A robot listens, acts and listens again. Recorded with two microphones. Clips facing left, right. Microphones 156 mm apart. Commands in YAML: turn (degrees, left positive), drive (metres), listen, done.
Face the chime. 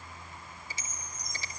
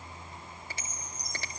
turn: -40
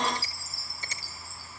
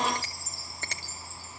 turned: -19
turn: -20
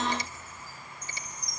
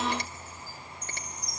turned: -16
done: "Found it: a chime, straight ahead."